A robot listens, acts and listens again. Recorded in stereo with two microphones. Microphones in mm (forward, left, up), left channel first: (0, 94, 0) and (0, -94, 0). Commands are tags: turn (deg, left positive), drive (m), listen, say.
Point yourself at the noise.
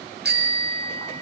<turn deg="-65"/>
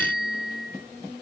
<turn deg="-55"/>
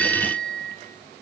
<say>Found it: a bicycle bell, straight ahead, over 4 m away.</say>